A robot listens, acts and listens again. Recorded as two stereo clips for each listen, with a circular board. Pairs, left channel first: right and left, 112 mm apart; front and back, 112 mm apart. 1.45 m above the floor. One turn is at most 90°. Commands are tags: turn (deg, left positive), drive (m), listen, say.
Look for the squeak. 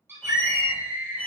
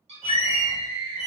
<turn deg="-90"/>
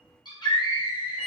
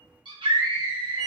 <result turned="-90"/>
<turn deg="-70"/>
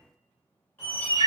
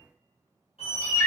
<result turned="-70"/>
<turn deg="-20"/>
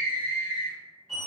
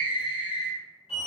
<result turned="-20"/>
<say>Facing the squeak, 1 to 2 m away.</say>